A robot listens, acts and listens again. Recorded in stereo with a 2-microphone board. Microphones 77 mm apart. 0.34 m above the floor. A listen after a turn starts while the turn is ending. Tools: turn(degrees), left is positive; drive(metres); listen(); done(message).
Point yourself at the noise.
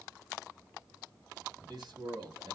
turn(degrees=-65)
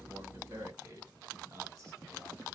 turn(degrees=-40)
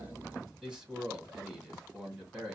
turn(degrees=-10)
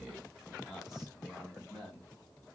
done("Facing the man speaking, 2 to 4 m away.")